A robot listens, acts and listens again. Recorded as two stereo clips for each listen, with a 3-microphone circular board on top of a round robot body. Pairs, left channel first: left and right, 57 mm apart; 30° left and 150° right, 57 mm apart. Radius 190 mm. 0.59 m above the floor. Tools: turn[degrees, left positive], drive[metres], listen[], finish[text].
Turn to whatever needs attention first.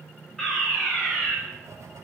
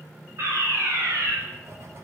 Thought: The fire alarm: 175° left.
Action: turn[175]
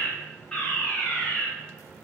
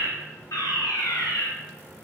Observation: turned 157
Thought: The fire alarm is now 15° left.
Action: turn[15]
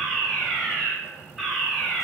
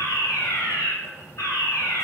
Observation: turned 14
Action: finish[Facing the fire alarm.]